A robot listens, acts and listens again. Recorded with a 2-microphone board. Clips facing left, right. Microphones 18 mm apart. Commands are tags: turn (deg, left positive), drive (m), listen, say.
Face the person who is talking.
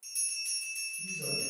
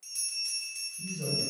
<turn deg="-65"/>
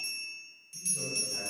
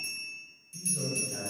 <turn deg="-50"/>
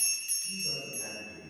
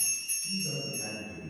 <say>Found it: a man speaking, straight ahead, 1 to 2 m away.</say>